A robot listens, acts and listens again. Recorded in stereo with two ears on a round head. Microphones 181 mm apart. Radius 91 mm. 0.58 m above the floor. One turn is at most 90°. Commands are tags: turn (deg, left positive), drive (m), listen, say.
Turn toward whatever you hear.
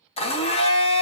<turn deg="30"/>
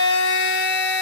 <turn deg="90"/>
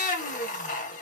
<turn deg="40"/>
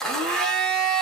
<say>Facing the blender, under 1 m away.</say>